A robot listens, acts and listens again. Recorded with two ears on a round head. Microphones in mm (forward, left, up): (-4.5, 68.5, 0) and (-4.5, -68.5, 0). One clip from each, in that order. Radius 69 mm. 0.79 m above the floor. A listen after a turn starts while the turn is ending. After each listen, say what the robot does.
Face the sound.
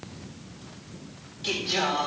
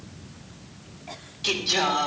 Turn 20° right.
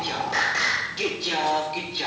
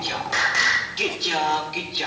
Turn 15° right.
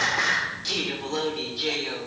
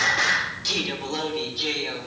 Turn 30° right.
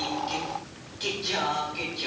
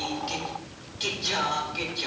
Turn 30° right.
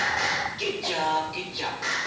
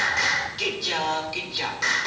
Turn 120° right.
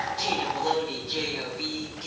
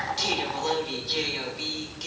Turn 55° right.
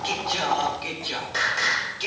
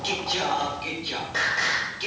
Turn 15° left.
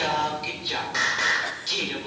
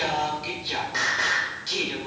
Turn 10° left.
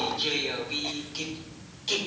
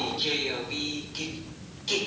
Found it: singing, straight ahead.